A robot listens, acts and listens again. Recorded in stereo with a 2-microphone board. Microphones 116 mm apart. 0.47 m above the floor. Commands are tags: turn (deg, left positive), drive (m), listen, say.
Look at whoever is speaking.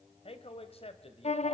<turn deg="60"/>
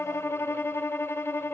<listen/>
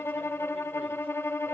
<listen/>
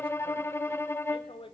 <turn deg="55"/>
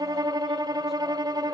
<listen/>
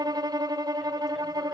<listen/>
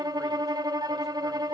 <say>I heard a man speaking from this way, but can't make it out now.</say>